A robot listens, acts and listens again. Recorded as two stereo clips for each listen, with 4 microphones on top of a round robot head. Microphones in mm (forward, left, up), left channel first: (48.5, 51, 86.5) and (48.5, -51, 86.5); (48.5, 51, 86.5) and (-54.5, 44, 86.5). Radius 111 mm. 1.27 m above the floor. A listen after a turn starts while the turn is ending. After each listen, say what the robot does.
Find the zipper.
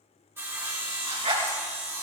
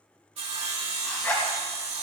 Turn 65° right.
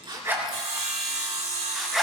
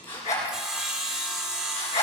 Found it: a zipper, straight ahead, 2 to 4 m away.